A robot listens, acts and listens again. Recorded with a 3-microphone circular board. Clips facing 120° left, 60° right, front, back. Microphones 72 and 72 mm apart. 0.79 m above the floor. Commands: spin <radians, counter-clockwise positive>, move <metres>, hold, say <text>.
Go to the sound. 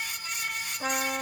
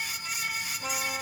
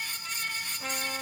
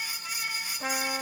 spin 2.01
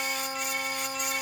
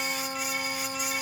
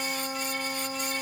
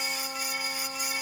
spin 0.35
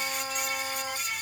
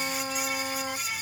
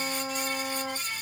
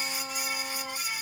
move 1.0
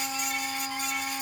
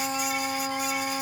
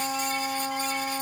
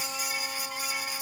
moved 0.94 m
move 1.0
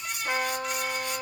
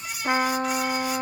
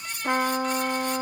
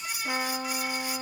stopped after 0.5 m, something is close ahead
say Arrived at the trumpet, straight ahead.